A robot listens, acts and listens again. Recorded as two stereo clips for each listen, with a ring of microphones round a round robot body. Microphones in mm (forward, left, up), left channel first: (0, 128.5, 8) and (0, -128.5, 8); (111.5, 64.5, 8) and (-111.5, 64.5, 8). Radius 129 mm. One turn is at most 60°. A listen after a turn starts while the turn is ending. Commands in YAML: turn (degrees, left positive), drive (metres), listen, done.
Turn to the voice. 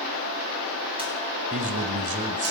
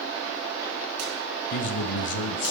turn: -35
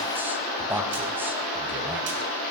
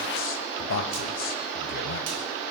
turn: -10
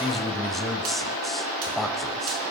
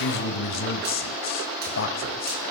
done: "Found it: a man speaking, straight ahead, 1 to 2 m away."